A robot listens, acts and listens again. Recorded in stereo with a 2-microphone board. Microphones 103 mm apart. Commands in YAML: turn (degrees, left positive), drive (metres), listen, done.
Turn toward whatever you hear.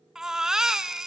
turn: -30
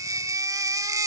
turn: -145
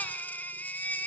turn: 20
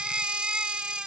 turn: -10
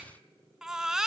done: "Facing the baby crying."